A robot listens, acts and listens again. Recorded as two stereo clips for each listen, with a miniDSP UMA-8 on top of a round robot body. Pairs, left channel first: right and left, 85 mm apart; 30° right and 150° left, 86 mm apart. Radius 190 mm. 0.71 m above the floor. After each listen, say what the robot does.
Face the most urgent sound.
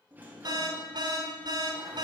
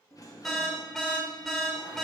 Turn 60° left.
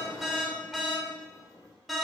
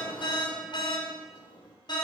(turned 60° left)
Facing the alarm, 1 to 2 m away.